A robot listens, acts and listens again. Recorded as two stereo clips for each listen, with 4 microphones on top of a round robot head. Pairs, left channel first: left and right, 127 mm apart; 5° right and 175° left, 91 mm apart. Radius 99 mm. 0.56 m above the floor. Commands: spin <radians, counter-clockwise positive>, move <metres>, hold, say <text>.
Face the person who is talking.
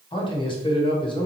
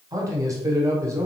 spin 2.18
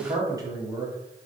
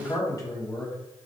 spin -0.70
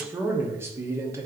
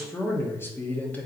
spin -0.96
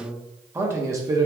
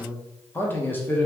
spin -0.96
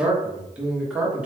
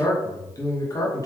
spin -0.26
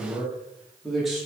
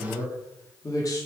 say Found it: a man speaking, straight ahead.